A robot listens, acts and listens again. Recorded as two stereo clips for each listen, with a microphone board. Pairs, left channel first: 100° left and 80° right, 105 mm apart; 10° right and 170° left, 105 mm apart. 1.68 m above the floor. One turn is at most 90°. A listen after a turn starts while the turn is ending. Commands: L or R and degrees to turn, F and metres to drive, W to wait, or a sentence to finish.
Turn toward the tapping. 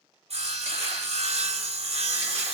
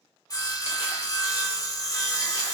W
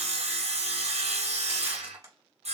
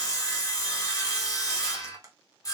R90
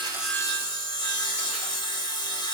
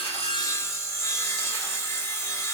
R45
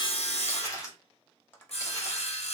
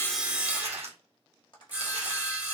L30
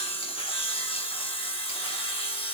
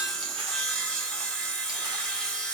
W
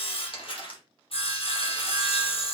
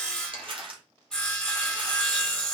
W
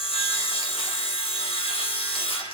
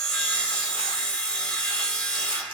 I heard tapping from this way, but can't make it out now.